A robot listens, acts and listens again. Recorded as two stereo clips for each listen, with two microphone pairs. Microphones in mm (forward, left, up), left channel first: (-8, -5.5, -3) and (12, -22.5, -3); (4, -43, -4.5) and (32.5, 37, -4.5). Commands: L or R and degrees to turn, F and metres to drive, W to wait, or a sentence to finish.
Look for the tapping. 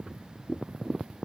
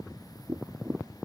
L120
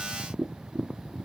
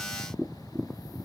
Facing the tapping.